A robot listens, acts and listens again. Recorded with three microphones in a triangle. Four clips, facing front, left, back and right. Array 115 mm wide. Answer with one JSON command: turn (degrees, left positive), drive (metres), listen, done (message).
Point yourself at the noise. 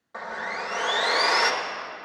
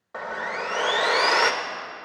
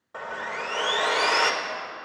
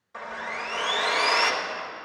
{"turn": 105}
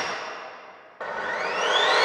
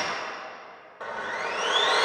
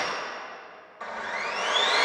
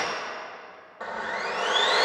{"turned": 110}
{"turn": -10}
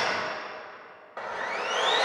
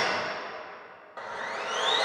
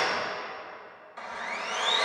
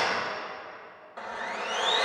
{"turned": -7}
{"done": "Found it: sawing, straight ahead, 1 to 2 m away."}